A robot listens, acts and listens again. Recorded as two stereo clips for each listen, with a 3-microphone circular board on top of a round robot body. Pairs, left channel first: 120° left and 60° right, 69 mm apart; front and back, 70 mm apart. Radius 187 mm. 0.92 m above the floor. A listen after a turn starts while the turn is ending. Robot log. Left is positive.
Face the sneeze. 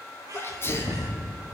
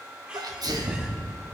note: The sneeze: 170° left.
cmd yaw +170
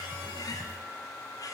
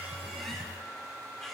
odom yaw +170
end: Facing where the sneeze came from. I can't hear it now.